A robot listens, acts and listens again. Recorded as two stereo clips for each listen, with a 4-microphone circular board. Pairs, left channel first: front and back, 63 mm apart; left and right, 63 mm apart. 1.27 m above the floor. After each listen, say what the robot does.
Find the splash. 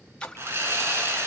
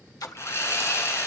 Turn 70° left.
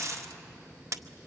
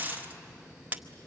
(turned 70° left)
I heard a splash from this way, but can't make it out now.